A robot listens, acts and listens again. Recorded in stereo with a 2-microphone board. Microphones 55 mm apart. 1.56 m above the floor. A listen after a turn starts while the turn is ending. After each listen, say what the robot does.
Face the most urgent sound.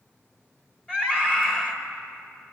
Turn 15° left.
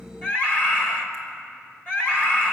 Turn 145° left.
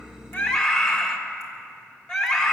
Turn 10° left.
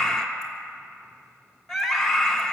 Found it: a scream, straight ahead, 2 to 4 m away.